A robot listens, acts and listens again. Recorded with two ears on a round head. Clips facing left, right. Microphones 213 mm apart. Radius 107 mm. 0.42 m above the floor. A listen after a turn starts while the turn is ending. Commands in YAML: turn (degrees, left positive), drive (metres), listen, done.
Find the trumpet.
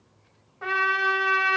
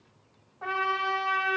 turn: 30
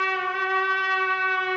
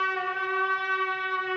turn: 115
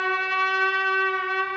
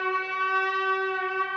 turn: 45
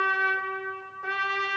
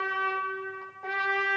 turn: 15
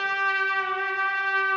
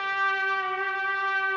done: "Found it: a trumpet, straight ahead, 1 to 2 m away."